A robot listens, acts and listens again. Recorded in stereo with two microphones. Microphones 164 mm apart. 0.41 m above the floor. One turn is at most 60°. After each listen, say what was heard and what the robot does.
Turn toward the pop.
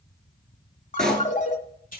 Turn 30° left.
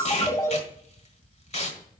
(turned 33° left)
Keep listening.
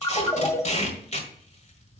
I heard a pop, but can't make it out now. It was about 30° right or 145° left.